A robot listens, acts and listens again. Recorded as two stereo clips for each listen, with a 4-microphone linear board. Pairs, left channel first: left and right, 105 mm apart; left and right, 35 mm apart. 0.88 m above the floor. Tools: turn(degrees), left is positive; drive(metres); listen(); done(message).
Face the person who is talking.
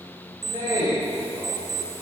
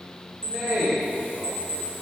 turn(degrees=-45)
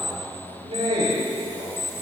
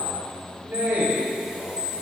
turn(degrees=-85)
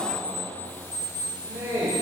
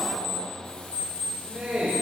turn(degrees=-25)
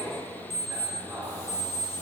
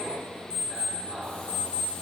listen()
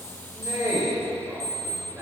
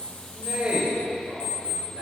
turn(degrees=-25)
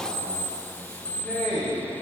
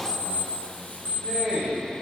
done("Found it: a man speaking, straight ahead, 2 to 4 m away.")